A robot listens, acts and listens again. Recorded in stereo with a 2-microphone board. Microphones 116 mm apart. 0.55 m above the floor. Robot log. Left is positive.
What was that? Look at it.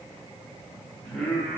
cmd yaw +30
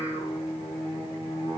note: So it is at 130° left.
cmd yaw +130
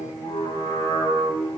note: The singing is now 35° left.
cmd yaw +35
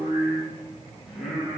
end: Found it: singing, straight ahead.